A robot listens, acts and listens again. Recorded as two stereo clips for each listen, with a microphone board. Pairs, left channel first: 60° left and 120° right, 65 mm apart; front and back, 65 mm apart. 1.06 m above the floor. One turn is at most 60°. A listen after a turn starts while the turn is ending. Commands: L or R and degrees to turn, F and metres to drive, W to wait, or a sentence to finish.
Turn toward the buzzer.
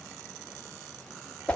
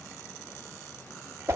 W
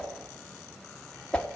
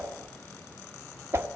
W
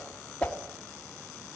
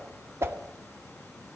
I can't make out a buzzer to turn to.